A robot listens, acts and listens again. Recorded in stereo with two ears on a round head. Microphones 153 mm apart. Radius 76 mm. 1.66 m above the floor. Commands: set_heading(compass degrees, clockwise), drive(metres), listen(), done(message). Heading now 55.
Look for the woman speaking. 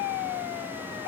listen()
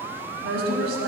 set_heading(145)
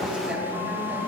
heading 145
set_heading(155)
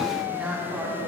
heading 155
set_heading(165)
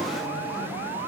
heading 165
listen()
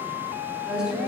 done("Facing the woman speaking.")